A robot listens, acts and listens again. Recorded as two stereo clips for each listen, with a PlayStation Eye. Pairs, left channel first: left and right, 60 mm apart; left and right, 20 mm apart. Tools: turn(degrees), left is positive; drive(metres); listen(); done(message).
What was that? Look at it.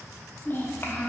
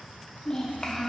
turn(degrees=40)
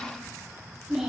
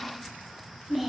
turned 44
done("Facing the child speaking, under 1 m away.")